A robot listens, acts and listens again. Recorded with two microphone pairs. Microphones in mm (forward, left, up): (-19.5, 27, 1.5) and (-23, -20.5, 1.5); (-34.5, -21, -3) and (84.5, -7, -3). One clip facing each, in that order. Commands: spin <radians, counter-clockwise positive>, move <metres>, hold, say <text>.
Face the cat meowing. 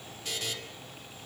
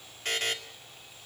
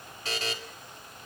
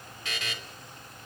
hold
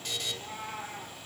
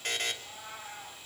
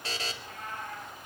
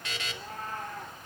spin 1.05
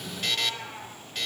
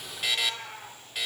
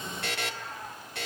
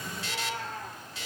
say Found it: a cat meowing, straight ahead.